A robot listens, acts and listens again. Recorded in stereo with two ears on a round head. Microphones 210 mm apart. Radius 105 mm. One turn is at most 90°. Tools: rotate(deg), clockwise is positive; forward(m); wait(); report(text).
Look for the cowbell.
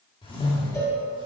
rotate(-30)
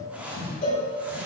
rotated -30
rotate(-90)
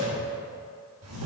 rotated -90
rotate(-45)
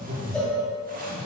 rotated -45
report("Facing the cowbell, 1 to 2 m away.")